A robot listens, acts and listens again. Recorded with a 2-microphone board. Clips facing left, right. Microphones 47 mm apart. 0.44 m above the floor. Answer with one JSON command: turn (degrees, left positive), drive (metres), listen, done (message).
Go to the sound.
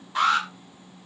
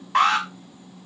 {"turn": -70}
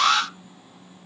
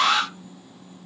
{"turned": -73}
{"turn": -15}
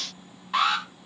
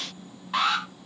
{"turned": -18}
{"drive": 1.0}
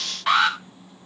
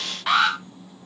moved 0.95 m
{"drive": 1.0}
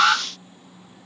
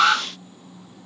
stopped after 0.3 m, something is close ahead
{"done": "Blocked. The alarm is further on, straight ahead."}